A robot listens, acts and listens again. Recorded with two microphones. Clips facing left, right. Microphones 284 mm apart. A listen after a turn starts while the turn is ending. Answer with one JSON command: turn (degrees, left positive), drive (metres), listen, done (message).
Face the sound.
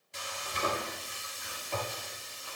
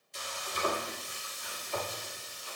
{"turn": 65}
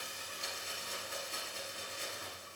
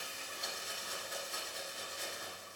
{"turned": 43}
{"turn": 25}
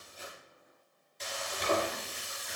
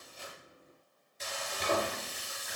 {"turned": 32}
{"done": "Facing the frying, 2 to 4 m away."}